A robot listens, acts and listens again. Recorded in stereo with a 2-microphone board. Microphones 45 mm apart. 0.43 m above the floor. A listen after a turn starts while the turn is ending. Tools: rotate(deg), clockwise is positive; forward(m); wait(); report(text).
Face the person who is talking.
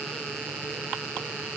wait()
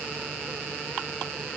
wait()
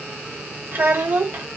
rotate(55)
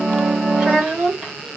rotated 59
rotate(20)
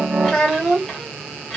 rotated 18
report("Facing the child speaking, 1 to 2 m away.")